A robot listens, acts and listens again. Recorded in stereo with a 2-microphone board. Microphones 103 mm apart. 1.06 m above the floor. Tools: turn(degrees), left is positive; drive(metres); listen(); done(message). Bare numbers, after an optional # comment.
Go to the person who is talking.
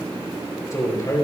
# The man speaking: about 30° left or 150° left.
turn(30)
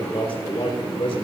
# So it is at 115° left.
turn(115)
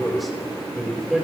drive(1.0)
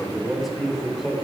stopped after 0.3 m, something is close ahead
done("Blocked. The man speaking is further on, straight ahead.")